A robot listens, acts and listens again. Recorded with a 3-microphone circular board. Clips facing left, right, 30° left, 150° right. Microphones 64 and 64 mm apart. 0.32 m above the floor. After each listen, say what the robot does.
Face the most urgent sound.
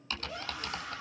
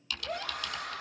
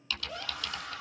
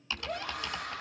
Turn 125° right.
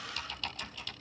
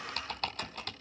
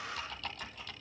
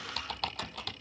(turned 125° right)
Keep listening.
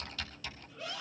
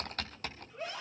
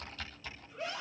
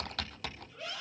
Turn 35° right.
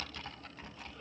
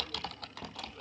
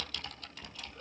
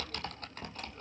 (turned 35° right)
Keep listening.
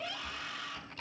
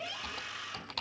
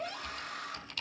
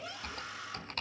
Turn 10° right.
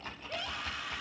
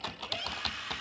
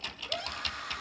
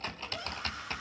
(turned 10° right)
Found it: a scream, straight ahead.